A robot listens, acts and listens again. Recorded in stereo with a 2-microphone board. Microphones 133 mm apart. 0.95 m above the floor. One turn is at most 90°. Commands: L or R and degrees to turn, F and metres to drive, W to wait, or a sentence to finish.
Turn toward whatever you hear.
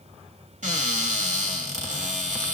R75
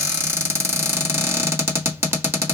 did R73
R20
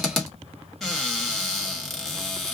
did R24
Facing the cupboard door.